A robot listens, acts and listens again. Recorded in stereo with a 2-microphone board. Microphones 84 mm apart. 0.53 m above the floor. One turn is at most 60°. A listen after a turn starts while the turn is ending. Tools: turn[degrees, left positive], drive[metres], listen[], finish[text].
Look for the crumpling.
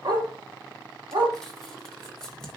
Action: turn[30]
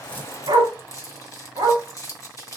Thought: So it is at 140° left.
Action: turn[60]
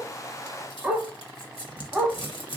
Thought: The crumpling is now 85° left.
Action: turn[60]
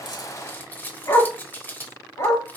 Thought: The crumpling is now 25° left.
Action: turn[25]
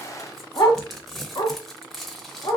Action: finish[Found it: crumpling, straight ahead, 1 to 2 m away.]